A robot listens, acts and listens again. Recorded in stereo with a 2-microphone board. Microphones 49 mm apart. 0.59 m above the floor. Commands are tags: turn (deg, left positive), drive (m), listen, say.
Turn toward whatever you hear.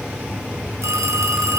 <turn deg="-90"/>
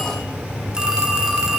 <turn deg="-15"/>
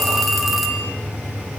<say>Found it: a phone ringing, straight ahead.</say>